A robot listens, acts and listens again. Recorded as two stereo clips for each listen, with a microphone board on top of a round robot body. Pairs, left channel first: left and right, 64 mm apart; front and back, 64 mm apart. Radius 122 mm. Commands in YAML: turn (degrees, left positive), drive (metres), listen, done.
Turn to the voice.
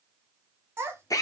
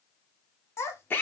turn: -40
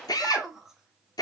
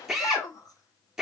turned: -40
done: "Facing the child speaking, 1 to 2 m away."